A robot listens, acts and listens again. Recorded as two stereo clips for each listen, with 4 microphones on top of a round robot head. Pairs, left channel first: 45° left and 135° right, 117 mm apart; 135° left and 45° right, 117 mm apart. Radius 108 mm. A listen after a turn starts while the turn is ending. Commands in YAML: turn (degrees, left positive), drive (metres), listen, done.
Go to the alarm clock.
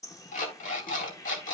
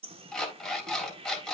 turn: 55
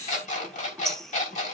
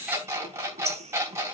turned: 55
turn: 25
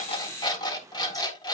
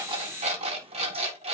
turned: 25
turn: -10
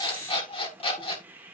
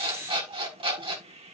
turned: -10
drive: 1.0
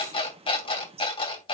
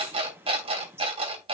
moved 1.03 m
drive: 1.0
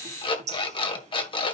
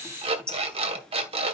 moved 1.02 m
drive: 1.0
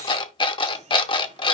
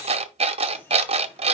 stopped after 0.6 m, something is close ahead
done: "Arrived at the alarm clock, straight ahead."